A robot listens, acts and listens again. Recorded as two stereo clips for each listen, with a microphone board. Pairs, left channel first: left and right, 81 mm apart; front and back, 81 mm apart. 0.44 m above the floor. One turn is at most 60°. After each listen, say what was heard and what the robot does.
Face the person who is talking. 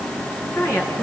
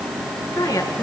The woman speaking: 35° left. Turn 35° left.
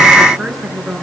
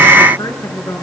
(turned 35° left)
Found it: a woman speaking, straight ahead, over 4 m away.